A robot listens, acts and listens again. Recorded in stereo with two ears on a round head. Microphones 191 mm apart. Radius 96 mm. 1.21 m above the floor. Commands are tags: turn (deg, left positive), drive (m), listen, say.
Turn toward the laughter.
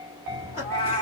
<turn deg="-30"/>
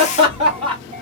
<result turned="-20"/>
<turn deg="-25"/>
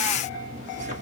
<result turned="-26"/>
<turn deg="-145"/>
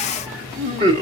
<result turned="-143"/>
<turn deg="-25"/>
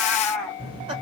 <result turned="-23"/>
<turn deg="-25"/>
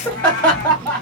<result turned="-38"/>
<say>Facing the laughter.</say>